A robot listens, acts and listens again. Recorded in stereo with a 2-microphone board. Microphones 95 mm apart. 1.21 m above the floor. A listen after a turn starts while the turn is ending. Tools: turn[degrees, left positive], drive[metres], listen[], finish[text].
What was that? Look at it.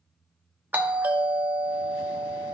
Thought: The doorbell: about 20° right or 160° right.
Action: turn[-20]
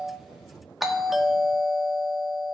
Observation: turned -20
Action: finish[Found it: a doorbell, straight ahead.]